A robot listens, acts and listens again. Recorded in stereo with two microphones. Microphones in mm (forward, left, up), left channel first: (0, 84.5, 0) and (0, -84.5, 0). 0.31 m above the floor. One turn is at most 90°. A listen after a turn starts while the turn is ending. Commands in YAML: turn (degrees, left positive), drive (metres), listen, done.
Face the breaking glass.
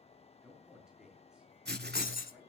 turn: 60
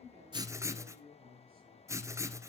listen: true
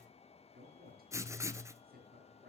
done: "I heard breaking glass, but can't make it out now. It was about straight ahead or 60° left."